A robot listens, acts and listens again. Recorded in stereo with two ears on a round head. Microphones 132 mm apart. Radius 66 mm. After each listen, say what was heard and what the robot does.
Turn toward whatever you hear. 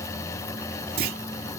The clunk: about 65° right or 115° right. Turn 65° right.
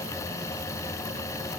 Keep listening.
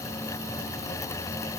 I heard a clunk, but can't make it out now. It was about straight ahead or 50° right.